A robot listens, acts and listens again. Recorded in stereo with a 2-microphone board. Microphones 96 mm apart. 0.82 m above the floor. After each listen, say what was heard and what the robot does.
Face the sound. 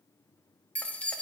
Turn 30° left.
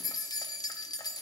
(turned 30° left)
So it is at 135° left. Turn 135° left.
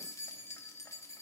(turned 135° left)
The keys jangling is now 30° left. Turn 30° left.
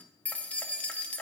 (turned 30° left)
The keys jangling is now 15° left. Turn 15° left.
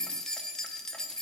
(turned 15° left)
Facing the keys jangling.